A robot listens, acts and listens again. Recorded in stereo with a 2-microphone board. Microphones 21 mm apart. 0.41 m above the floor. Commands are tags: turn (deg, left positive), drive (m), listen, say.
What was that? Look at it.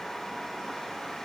<listen/>
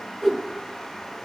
<turn deg="30"/>
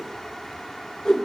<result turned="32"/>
<turn deg="145"/>
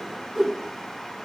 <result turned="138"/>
<say>Found it: a whoosh, straight ahead.</say>